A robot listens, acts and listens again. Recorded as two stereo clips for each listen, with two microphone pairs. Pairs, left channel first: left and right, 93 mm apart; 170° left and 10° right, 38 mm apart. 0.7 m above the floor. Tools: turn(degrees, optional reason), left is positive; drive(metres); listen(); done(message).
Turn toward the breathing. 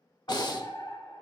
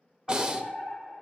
turn(degrees=55, reason="The breathing: 55° left.")
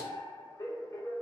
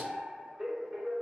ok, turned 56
listen()
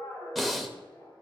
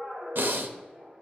done("Found it: breathing, straight ahead.")